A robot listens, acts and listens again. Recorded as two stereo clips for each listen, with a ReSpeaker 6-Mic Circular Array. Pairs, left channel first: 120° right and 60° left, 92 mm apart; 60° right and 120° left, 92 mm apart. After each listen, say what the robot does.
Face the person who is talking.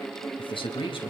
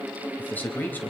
Turn 130° right.
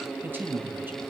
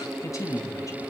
Found it: a man speaking, straight ahead.